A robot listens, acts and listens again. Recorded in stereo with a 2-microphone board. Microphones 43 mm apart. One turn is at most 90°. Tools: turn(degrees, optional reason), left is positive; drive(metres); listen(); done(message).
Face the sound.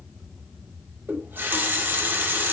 turn(degrees=-55, reason="The running tap: about 55° right or 125° right.")
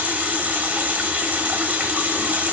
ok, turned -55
turn(degrees=-40, reason="So it is at 40° right.")
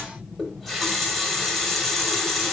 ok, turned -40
done("Found it: a running tap, straight ahead.")